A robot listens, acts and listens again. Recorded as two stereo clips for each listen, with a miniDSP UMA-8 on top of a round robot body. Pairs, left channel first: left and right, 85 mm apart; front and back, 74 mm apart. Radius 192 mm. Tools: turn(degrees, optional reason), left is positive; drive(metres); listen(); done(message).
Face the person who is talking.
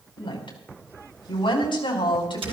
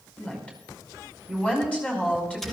turn(degrees=75, reason="The woman speaking: 75° left.")
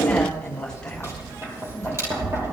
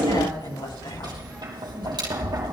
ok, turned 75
turn(degrees=10, reason="The woman speaking is now 10° left.")
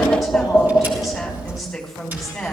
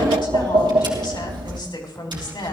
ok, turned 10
done("Found it: a woman speaking, straight ahead.")